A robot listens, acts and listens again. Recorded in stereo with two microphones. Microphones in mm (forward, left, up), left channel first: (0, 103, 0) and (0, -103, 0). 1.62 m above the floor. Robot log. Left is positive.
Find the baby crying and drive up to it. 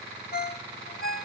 cmd idle
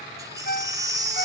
note: The baby crying: about 15° right or 165° right.
cmd yaw -15
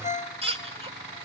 note: So it is at 150° right.
cmd yaw -150
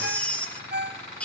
cmd fwd 1.0
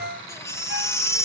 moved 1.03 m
note: The baby crying is now 20° left.
cmd yaw +20
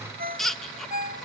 cmd fwd 1.0
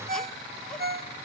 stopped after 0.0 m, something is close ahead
cmd idle
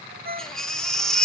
end: I am next to the baby crying.